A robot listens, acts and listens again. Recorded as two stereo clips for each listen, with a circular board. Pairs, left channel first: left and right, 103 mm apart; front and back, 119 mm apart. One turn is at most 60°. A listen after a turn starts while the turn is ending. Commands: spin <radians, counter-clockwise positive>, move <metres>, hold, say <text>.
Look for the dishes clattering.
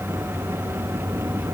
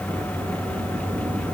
hold
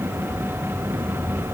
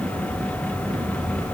hold
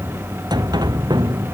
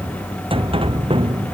say I can't make out dishes clattering, only a sliding door.